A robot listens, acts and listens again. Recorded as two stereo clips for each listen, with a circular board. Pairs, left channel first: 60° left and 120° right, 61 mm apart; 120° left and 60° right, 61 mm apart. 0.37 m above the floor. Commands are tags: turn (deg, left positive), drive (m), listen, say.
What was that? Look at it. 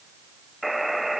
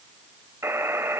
<turn deg="-30"/>
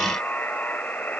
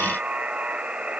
<say>Facing the buzzer.</say>